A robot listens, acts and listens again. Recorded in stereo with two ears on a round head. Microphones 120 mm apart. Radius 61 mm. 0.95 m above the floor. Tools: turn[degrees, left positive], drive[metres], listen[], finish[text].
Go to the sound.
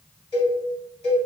Thought: The cowbell: about 40° left or 140° left.
Action: turn[40]
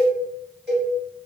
Action: drive[1.0]
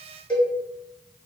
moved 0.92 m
Thought: The cowbell is now 10° left.
Action: turn[10]
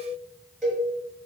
Action: drive[1.0]
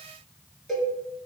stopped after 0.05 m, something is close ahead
Action: finish[Arrived at the cowbell, straight ahead.]